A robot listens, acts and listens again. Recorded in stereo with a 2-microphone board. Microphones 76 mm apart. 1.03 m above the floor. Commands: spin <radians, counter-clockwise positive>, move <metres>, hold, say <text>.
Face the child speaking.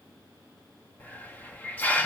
hold
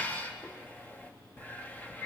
hold
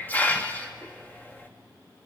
say I can't make out a child speaking, only a hiss.